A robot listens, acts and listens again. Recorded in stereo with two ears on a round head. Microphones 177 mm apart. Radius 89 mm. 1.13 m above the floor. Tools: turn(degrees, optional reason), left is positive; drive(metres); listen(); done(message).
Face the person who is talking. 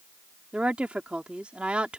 turn(degrees=-30)
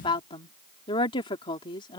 turn(degrees=25, reason="So it is at 25° left.")
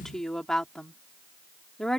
done("Found it: a woman speaking, straight ahead.")